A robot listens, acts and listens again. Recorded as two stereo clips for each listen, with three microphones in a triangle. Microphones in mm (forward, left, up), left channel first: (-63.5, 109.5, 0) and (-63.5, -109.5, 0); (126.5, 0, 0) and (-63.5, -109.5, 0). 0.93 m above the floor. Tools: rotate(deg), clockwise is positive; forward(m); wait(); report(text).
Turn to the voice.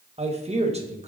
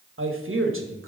rotate(150)
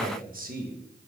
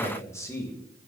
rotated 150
rotate(45)
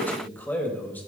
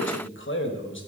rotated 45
rotate(-10)
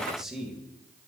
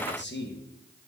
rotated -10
report("Facing the man speaking, 1 to 2 m away.")